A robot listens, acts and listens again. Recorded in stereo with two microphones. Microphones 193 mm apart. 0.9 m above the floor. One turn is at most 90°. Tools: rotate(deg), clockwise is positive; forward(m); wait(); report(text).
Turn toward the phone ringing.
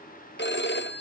rotate(-65)
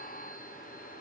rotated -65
wait()
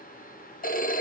rotate(-50)
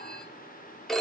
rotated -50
report("Found it: a phone ringing, straight ahead.")